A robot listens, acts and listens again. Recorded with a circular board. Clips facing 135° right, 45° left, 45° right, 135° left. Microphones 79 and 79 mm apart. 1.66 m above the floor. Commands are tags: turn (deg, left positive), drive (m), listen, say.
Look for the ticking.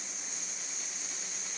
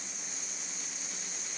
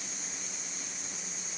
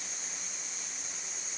<listen/>
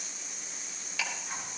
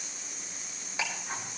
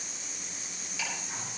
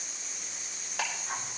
<turn deg="105"/>
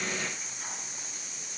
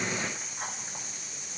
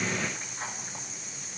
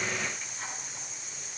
<listen/>
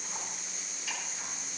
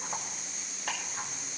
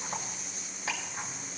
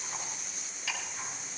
<turn deg="10"/>
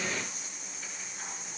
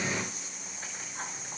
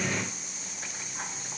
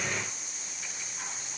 <listen/>
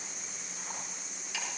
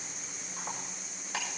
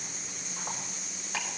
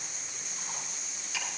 <say>Found it: ticking, straight ahead, over 4 m away.</say>